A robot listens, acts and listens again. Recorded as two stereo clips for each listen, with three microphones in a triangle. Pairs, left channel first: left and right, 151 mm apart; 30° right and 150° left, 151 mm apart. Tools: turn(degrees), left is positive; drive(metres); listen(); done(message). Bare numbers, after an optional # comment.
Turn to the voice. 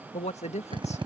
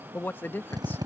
# The man speaking: 45° left.
turn(45)
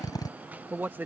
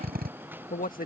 # The man speaking is now 10° right.
turn(-10)
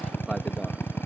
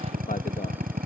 listen()
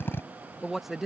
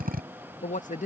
done("Found it: a man speaking, straight ahead.")